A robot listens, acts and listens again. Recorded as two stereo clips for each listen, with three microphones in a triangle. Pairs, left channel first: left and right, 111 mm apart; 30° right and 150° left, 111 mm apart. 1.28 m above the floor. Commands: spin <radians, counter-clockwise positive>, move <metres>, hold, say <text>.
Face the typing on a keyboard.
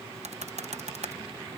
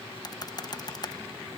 spin -1.48
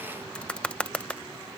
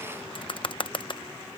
spin 0.17
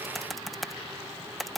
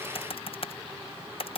say Facing the typing on a keyboard.